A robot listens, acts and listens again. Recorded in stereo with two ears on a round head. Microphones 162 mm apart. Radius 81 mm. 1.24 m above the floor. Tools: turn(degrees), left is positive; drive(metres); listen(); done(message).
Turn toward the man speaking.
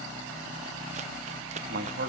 turn(degrees=-60)
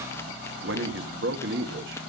turn(degrees=-60)
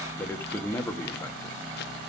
turn(degrees=10)
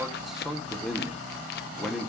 done("Found it: a man speaking, straight ahead, 1 to 2 m away.")